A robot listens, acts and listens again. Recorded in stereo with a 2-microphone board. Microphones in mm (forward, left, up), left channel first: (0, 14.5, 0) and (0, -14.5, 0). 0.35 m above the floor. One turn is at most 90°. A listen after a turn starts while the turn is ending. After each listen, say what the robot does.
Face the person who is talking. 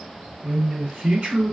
Turn 65° right.
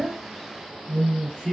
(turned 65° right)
Turn 10° right.
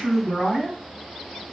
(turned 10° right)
Facing the man speaking.